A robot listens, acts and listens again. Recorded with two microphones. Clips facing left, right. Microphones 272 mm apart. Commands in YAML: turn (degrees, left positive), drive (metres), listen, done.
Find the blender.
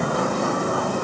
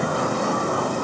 listen: true
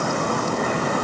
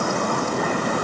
listen: true
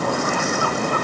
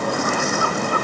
done: "I can't make out a blender to turn to."